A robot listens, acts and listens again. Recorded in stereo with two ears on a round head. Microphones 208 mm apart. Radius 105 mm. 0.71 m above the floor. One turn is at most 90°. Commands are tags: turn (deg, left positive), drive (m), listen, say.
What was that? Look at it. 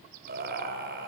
<turn deg="-45"/>
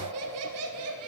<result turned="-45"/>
<turn deg="-70"/>
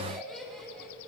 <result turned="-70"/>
<say>Facing the laughter, over 4 m away.</say>